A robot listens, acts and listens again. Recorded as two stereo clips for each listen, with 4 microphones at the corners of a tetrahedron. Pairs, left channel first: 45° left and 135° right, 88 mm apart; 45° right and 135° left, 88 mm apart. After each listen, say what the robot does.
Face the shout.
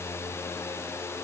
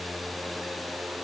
Keep listening.
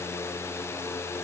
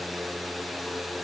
Keep listening.
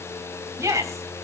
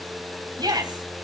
Turn 170° left.
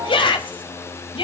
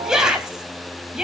Turn 50° left.
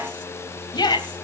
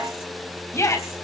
Turn 10° left.
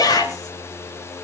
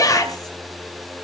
Facing the shout.